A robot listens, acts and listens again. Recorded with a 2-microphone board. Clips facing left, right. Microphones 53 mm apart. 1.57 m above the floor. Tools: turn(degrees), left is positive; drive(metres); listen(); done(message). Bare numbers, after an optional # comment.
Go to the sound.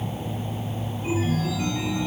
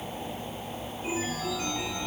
turn(-30)
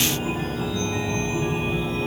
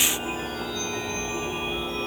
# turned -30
# So it is at 20° left.
turn(20)
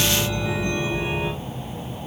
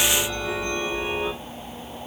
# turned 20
drive(1.0)
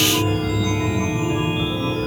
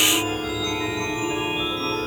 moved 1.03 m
drive(1.0)
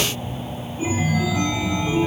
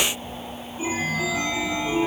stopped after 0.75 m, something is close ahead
# The chime is now 10° right.
turn(-10)
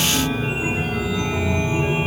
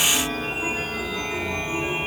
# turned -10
done("Arrived at the chime, straight ahead.")